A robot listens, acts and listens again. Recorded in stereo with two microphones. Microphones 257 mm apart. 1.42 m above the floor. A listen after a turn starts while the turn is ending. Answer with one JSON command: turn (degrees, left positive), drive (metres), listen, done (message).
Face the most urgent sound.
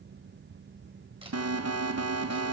{"turn": -65}
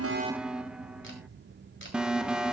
{"done": "Found it: an alarm, straight ahead, 1 to 2 m away."}